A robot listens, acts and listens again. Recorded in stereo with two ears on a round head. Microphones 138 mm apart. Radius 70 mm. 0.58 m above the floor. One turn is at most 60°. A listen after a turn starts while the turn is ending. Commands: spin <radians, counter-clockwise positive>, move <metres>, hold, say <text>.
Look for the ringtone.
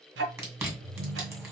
spin -0.79
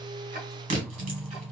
spin -1.05
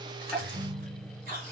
spin -0.52
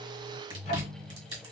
say Facing the ringtone, 1 to 2 m away.